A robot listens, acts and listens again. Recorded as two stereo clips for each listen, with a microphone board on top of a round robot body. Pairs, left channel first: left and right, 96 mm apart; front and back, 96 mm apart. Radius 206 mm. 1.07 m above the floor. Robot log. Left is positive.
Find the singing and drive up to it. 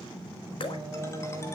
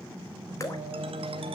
note: The singing: 145° right.
cmd yaw -145
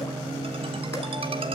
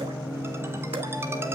note: The singing is now 55° right.
cmd yaw -55
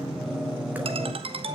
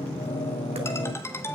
cmd fwd 1.0
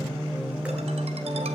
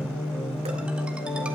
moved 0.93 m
note: The singing is now 10° right.
cmd yaw -10
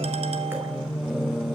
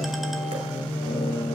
cmd fwd 1.0
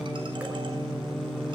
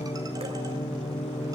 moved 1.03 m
cmd fwd 1.0
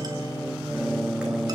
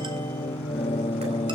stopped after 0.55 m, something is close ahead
end: Arrived at the singing, straight ahead.